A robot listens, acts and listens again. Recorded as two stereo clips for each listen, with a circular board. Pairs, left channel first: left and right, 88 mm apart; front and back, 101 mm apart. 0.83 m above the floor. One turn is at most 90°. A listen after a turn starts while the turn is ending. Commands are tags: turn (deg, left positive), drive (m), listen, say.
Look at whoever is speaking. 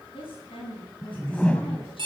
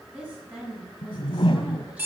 <turn deg="90"/>
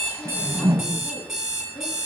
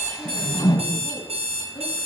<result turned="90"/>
<turn deg="15"/>
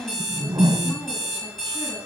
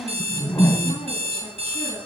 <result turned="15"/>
<listen/>
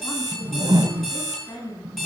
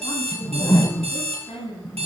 <turn deg="35"/>
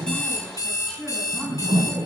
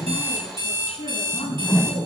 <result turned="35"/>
<say>Facing the woman speaking, over 4 m away.</say>